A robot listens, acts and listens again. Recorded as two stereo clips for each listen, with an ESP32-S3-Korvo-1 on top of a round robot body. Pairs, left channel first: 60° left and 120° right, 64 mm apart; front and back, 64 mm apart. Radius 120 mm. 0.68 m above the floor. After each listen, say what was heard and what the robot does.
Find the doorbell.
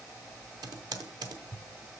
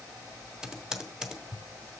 Keep listening.
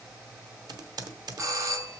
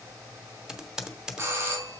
The doorbell: 145° right. Turn 145° right.
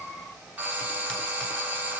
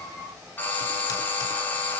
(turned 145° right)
The doorbell is now 60° right. Turn 60° right.
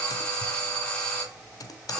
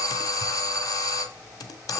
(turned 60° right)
The doorbell is now 15° right. Turn 15° right.
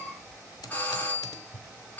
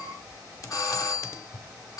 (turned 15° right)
Facing the doorbell, 2 to 4 m away.